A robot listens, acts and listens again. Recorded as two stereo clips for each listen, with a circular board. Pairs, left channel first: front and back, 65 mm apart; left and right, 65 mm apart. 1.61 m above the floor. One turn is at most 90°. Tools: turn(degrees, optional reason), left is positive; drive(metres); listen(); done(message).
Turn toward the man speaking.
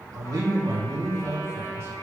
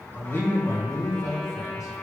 turn(degrees=90, reason="The man speaking: 125° left.")
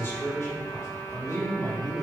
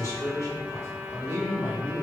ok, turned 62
turn(degrees=35, reason="The man speaking is now 35° left.")
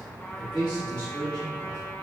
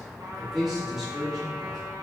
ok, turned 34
done("Found it: a man speaking, straight ahead.")